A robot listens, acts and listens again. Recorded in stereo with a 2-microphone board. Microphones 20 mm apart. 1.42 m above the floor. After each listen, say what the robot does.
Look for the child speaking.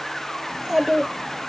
Turn 20° right.
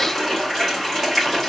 Keep listening.
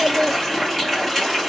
Turn 135° right.
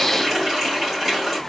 Keep listening.
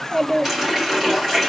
Turn 25° left.
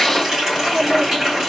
Turn 15° left.
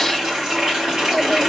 Keep listening.
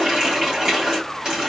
Keep listening.
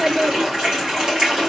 Facing the child speaking, under 1 m away.